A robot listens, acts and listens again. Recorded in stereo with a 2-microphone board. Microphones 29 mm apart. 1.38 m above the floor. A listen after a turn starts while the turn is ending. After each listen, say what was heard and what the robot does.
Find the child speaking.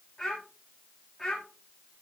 Turn 30° left.
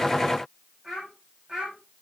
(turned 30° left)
So it is at 15° right. Turn 15° right.
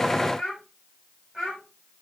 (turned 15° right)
Found it: a child speaking, straight ahead, over 4 m away.